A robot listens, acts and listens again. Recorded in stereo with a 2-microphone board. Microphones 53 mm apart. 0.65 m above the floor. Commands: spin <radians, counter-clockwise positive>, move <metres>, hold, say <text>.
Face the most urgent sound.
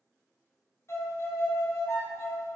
hold
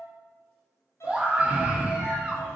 spin -0.35
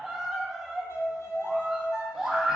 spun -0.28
say Found it: a scream, straight ahead.